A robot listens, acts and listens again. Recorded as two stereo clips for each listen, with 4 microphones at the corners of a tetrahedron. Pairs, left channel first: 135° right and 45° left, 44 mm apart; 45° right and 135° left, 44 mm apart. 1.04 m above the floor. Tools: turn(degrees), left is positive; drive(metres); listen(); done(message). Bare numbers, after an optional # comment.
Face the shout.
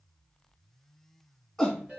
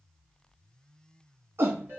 # The shout: 140° left.
turn(140)
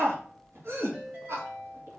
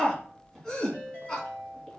# The shout is now 30° left.
turn(30)
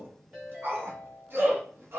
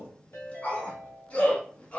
# The shout is now 10° left.
turn(10)
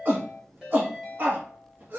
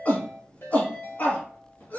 done("Found it: a shout, straight ahead, 1 to 2 m away.")